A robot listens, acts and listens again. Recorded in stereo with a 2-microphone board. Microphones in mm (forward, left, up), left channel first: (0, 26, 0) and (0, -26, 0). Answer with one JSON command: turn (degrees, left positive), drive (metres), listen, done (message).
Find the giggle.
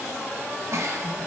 {"turn": -70}
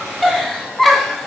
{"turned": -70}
{"done": "Facing the giggle, 2 to 4 m away."}